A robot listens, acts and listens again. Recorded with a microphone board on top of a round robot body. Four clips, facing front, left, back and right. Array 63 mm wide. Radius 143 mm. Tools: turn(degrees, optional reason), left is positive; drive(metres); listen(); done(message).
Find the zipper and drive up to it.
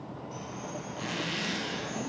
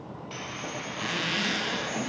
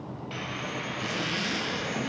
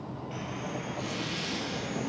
turn(degrees=90, reason="The zipper: 90° left.")
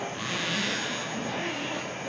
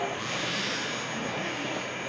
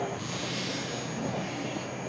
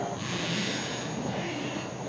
drive(metres=1.0)
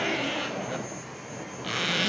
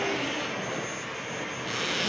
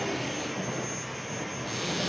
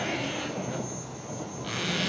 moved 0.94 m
drive(metres=1.0)
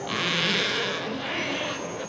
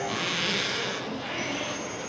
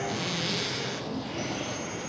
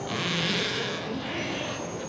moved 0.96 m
drive(metres=1.0)
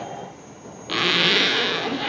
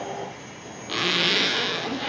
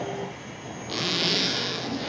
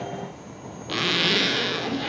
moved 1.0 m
drive(metres=1.0)
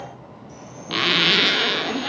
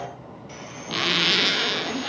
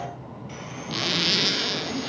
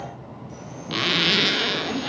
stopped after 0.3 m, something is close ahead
done("Arrived at the zipper, straight ahead.")